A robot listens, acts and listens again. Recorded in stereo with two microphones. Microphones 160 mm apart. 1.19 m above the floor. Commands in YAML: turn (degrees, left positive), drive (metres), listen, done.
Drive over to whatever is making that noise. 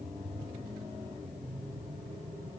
listen: true
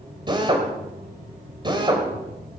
turn: -30
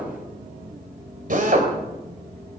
turn: -120
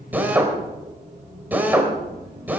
turn: -10
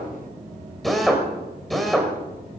drive: 1.0
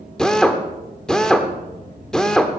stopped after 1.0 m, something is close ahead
done: "I am next to the drill."